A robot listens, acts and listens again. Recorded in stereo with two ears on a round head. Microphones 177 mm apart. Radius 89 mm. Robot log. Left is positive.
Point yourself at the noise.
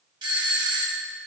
note: The doorbell: about 25° right or 155° right.
cmd yaw -25
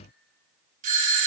note: So it is at 125° right.
cmd yaw -125
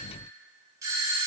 note: The doorbell is now 20° right.
cmd yaw -20
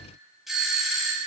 end: Facing the doorbell, 2 to 4 m away.